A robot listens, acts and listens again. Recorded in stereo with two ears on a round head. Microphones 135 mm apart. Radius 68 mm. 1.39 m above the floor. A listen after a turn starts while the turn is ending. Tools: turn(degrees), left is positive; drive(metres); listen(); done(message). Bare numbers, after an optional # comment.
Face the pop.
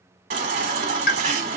# The pop: about 60° left or 120° left.
turn(60)
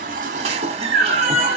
listen()
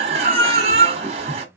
done("I heard a pop, but can't make it out now. It was about straight ahead or 60° left.")